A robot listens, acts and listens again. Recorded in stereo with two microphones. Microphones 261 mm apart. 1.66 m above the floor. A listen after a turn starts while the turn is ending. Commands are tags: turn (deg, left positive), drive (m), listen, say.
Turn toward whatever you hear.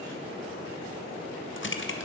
<turn deg="50"/>
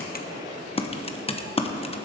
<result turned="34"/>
<turn deg="25"/>
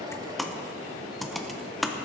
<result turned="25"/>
<say>Facing the typing on a keyboard.</say>